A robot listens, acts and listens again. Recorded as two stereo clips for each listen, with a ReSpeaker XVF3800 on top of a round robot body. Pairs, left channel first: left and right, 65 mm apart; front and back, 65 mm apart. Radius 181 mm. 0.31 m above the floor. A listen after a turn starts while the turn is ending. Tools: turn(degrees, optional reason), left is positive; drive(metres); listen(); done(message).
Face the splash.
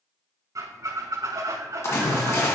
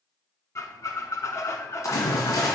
turn(degrees=40, reason="The splash: 40° left.")
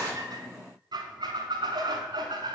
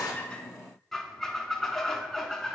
done("I heard a splash from this way, but can't make it out now.")